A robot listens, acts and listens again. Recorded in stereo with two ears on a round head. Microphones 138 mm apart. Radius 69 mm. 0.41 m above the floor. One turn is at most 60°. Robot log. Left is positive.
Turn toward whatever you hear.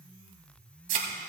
note: The thud: about 60° right or 120° right.
cmd yaw -60
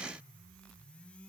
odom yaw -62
cmd idle
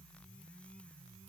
end: I heard a thud, but can't make it out now. It was about 5° left or 60° right.